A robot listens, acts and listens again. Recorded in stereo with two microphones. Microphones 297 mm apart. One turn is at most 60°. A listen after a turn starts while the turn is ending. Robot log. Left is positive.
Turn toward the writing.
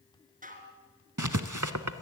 cmd yaw -60
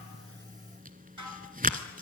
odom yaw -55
note: So it is at 30° right.
cmd yaw -30
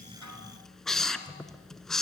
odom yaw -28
end: Facing the writing.